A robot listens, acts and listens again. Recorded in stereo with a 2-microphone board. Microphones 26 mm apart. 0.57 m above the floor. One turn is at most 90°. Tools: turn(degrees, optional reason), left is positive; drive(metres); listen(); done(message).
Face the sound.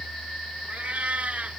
turn(degrees=-70, reason="The cat meowing: about 70° right or 110° right.")
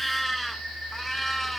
done("Facing the cat meowing.")